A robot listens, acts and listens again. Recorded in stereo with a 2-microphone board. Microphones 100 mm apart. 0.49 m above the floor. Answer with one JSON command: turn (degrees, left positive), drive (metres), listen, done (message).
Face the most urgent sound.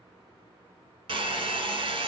{"listen": true}
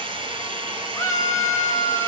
{"turn": 30}
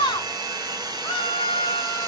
{"turn": 115}
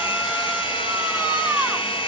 {"turn": -15}
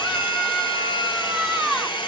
{"done": "Facing the scream."}